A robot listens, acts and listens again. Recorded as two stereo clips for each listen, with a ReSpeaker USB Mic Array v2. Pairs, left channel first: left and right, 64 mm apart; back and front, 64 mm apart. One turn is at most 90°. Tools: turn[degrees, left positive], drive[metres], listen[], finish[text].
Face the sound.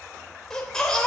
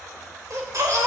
Thought: The baby crying: 10° left.
Action: turn[10]
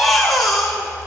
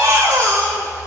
Action: finish[Found it: a baby crying, straight ahead.]